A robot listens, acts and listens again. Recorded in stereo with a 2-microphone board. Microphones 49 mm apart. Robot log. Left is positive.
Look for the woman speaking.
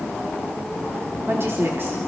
note: The woman speaking: about 55° right or 125° right.
cmd yaw -55
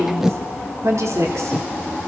note: So it is at 80° right.
cmd yaw -80
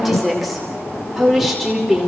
end: Found it: a woman speaking, straight ahead, over 4 m away.